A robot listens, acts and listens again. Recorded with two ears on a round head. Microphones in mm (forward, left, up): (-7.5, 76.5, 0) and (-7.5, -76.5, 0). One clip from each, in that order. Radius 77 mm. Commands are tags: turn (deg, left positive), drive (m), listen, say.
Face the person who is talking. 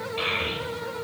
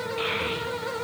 <turn deg="45"/>
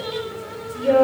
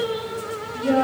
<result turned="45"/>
<turn deg="95"/>
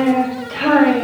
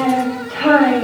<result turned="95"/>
<turn deg="15"/>
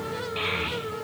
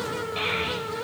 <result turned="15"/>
<say>Facing the child speaking, 2 to 4 m away.</say>